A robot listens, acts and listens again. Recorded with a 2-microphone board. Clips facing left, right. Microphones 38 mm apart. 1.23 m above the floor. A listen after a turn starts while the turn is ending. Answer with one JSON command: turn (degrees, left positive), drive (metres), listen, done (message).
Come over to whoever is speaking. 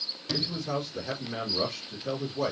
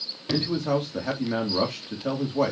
{"turn": -65}
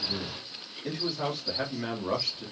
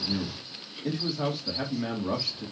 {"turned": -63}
{"drive": 1.0}
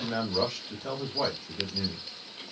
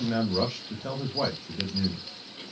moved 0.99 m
{"drive": 1.0}
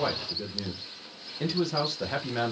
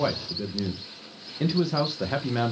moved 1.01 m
{"turn": -10}
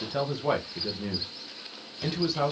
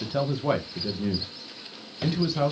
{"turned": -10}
{"drive": 1.0}
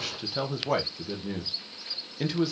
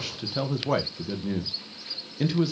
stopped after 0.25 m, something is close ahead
{"done": "I am next to the man speaking."}